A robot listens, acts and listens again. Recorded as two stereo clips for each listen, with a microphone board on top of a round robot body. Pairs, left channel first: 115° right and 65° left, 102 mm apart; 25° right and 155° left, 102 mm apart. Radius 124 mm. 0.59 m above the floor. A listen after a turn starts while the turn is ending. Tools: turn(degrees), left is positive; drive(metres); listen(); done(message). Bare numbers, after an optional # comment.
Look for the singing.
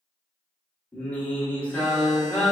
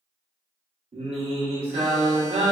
# The singing: 170° left.
turn(170)
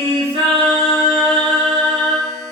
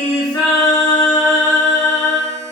# The singing is now 20° left.
turn(20)
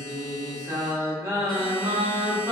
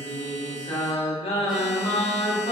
done("Facing the singing.")